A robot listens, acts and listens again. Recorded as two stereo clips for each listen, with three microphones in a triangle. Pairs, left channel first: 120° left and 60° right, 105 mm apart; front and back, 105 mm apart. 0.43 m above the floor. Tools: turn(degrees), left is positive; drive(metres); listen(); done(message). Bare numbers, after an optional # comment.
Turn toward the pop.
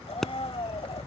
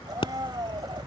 # The pop: 35° left.
turn(35)
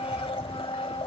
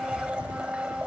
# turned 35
done("Facing where the pop came from. I can't hear it now.")